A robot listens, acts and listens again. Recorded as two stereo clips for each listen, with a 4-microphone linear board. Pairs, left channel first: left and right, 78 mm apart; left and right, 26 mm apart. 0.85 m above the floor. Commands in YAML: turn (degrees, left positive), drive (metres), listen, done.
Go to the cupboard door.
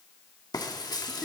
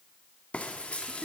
listen: true
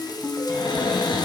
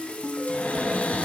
turn: 90
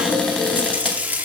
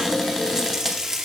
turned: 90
listen: true
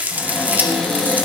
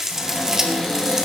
drive: 1.0
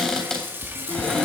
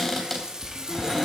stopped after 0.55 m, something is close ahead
done: "Something is in my way. I am facing the cupboard door but have not reached it."